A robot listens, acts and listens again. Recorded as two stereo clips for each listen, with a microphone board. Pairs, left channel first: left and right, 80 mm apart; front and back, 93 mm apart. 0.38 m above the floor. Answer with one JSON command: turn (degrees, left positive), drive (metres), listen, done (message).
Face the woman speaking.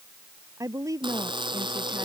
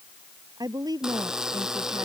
{"turn": -135}
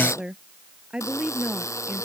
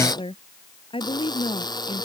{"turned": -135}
{"turn": -10}
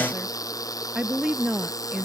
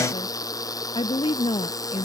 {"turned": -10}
{"turn": -10}
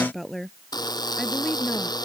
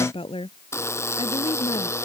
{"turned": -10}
{"done": "Found it: a woman speaking, straight ahead."}